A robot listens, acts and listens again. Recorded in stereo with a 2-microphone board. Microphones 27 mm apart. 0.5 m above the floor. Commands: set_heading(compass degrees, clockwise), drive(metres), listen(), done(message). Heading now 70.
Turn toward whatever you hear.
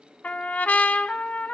set_heading(340)
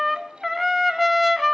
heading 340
done("Facing the trumpet.")